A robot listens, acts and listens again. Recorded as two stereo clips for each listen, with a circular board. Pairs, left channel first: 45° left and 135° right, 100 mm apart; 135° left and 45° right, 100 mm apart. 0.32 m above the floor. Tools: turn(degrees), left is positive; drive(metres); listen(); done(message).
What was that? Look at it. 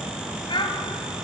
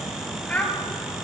turn(degrees=60)
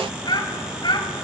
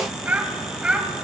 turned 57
turn(degrees=30)
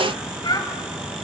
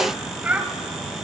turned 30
turn(degrees=25)
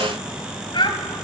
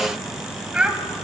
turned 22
turn(degrees=30)
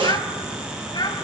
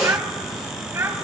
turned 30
turn(degrees=15)
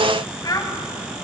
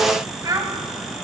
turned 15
done("Found it: a child speaking, straight ahead, 1 to 2 m away.")